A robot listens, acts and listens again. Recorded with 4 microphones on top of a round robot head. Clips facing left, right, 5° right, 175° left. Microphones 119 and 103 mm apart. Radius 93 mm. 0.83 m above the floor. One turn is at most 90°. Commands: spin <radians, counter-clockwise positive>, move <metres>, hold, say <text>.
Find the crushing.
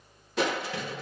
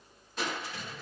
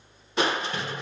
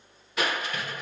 spin 1.05
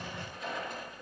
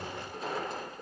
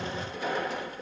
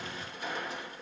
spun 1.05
spin -0.44
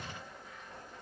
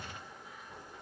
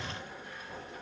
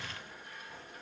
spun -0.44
say Found it: crushing, straight ahead.